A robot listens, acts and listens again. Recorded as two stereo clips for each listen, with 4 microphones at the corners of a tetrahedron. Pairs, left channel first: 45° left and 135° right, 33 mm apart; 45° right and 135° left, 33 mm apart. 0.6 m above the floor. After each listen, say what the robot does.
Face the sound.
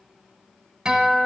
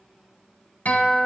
Turn 70° right.
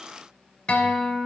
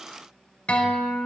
Facing the guitar.